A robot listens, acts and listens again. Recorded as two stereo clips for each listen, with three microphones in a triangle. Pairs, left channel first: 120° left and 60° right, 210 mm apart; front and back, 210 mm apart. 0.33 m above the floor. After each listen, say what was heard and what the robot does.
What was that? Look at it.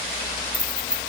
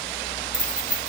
The keys jangling: 155° right. Turn 155° right.
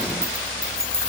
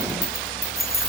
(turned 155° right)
The keys jangling is now 20° left. Turn 20° left.
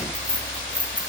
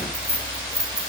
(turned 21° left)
The keys jangling is now 10° left. Turn 10° left.
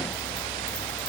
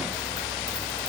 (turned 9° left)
Keep listening.
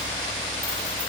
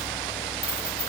Keep listening.
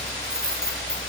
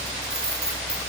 The keys jangling is now 15° left. Turn 15° left.
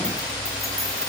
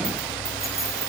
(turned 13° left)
Keep listening.
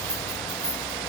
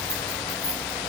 Keep listening.
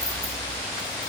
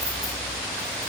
Facing where the keys jangling came from. I can't hear it now.